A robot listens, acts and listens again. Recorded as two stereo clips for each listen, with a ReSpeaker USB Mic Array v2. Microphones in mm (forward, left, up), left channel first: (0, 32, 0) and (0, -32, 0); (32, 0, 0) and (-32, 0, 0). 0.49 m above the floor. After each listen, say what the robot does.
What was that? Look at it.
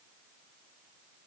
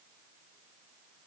Keep listening.
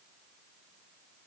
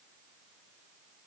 Keep listening.
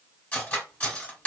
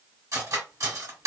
Turn 155° left.
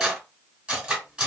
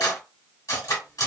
Turn 15° right.
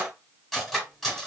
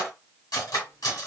Found it: cutlery clinking, straight ahead.